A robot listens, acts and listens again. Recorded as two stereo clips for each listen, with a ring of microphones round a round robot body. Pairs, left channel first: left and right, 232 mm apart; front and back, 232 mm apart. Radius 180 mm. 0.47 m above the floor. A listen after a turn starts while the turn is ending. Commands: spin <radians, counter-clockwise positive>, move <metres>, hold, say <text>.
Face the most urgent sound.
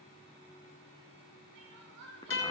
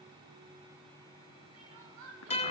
spin -2.44
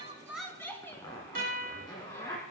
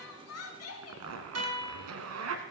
spin 0.17
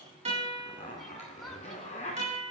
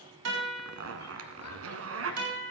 hold
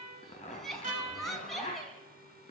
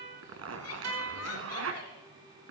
say Found it: crying, straight ahead, 2 to 4 m away.